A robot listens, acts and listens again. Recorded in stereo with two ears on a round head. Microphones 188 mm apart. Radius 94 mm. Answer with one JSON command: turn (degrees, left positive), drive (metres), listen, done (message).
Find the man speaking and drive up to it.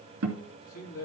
{"turn": 90}
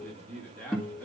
{"drive": 1.0}
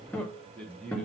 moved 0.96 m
{"drive": 1.0}
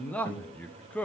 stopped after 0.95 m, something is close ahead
{"done": "I am next to the man speaking."}